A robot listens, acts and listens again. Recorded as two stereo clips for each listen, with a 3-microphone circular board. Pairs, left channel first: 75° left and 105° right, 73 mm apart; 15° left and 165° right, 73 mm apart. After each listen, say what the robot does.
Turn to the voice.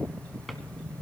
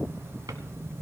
Keep listening.
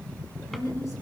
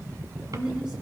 Turn 115° left.
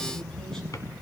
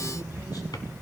Keep listening.
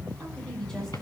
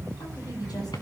Turn 10° right.
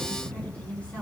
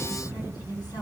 Found it: a woman speaking, straight ahead, over 4 m away.